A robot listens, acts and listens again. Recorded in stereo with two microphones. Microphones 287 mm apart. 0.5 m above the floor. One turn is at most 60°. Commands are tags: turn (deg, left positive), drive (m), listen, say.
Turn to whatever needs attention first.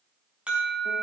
<turn deg="-30"/>
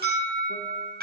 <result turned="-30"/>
<turn deg="-60"/>
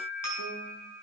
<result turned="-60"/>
<turn deg="-60"/>
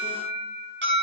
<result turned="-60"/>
<turn deg="-40"/>
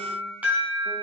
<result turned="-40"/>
<say>Facing the alarm, over 4 m away.</say>